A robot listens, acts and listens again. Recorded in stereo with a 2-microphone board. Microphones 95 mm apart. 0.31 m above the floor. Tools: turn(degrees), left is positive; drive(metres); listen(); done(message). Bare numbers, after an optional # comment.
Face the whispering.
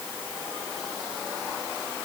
listen()
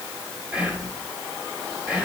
turn(-30)
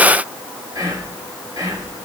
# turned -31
# So it is at 135° right.
turn(-135)
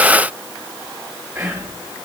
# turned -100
# The whispering is now 35° right.
turn(-35)
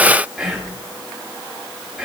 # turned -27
done("Found it: whispering, straight ahead, 2 to 4 m away.")